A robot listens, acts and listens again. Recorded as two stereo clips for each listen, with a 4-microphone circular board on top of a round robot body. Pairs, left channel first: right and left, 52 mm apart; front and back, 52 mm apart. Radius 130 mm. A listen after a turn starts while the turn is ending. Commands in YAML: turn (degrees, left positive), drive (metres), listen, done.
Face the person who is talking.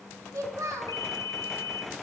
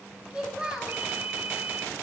turn: 110
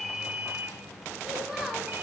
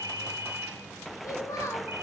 turn: 10
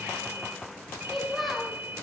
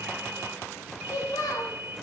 done: "Found it: a child speaking, straight ahead."